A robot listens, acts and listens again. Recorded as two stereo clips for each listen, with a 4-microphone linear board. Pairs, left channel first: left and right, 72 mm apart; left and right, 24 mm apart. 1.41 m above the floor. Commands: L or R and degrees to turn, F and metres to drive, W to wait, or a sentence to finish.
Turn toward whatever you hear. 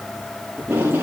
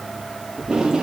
R30
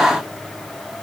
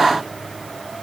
W
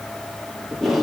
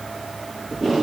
Found it: tape being pulled, straight ahead.